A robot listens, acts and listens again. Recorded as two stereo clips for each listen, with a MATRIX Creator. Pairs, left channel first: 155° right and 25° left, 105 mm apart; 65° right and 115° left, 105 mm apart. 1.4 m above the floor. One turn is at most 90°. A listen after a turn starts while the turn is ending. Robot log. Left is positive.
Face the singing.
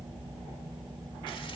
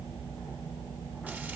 cmd idle
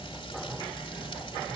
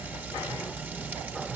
cmd idle
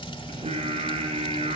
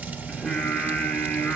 note: The singing: 15° left.
cmd yaw +15
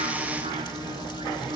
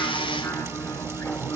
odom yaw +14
end: Facing the singing, over 4 m away.